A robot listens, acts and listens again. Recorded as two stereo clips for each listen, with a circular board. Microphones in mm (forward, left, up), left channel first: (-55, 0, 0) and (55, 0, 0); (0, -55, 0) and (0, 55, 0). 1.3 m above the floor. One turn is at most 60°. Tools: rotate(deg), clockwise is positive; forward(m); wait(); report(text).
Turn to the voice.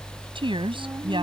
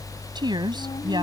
rotate(-40)
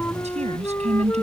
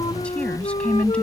rotate(10)
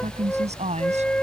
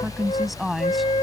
report("Found it: a woman speaking, straight ahead.")